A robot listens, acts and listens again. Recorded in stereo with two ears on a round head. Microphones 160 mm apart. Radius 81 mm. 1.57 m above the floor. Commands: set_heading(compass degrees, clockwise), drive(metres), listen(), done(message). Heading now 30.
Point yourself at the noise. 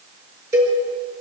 set_heading(45)
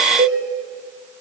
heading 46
set_heading(196)
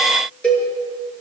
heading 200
done("Facing the cowbell.")